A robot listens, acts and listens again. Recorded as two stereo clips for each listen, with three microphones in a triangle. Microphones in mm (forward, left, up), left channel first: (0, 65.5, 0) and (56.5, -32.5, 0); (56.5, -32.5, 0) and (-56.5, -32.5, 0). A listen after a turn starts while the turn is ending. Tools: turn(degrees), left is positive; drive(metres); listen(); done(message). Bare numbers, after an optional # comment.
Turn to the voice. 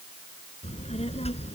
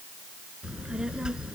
# The child speaking: 95° left.
turn(95)
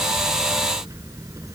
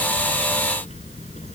done("Found it: a child speaking, straight ahead.")